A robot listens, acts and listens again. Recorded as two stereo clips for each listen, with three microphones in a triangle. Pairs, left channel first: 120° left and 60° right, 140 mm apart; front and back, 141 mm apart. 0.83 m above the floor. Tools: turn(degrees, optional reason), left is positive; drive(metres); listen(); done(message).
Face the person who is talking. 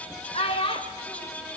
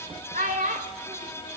turn(degrees=170, reason="The child speaking: 170° left.")
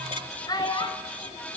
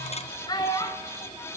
turn(degrees=60, reason="The child speaking is now 60° left.")
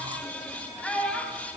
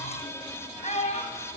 turn(degrees=40, reason="The child speaking is now 40° left.")
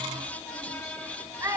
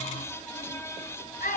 turn(degrees=10, reason="The child speaking is now 10° left.")
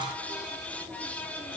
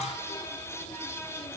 listen()
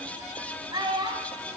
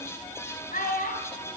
done("Found it: a child speaking, straight ahead.")